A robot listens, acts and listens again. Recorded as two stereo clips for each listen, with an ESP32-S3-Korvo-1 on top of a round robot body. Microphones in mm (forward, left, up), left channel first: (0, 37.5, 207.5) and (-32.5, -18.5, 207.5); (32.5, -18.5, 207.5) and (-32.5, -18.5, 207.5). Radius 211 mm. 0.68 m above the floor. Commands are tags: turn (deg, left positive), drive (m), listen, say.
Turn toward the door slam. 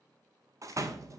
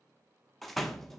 <turn deg="-90"/>
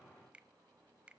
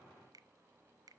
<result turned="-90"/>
<say>Facing where the door slam came from. I can't hear it now.</say>